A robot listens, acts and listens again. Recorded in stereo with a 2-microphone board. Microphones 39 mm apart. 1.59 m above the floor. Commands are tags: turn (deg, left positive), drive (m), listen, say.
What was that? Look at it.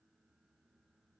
<listen/>
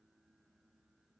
<listen/>
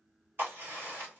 <turn deg="-70"/>
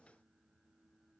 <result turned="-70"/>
<listen/>
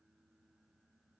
<say>I heard a crack, but can't make it out now. It was about straight ahead or 40° right.</say>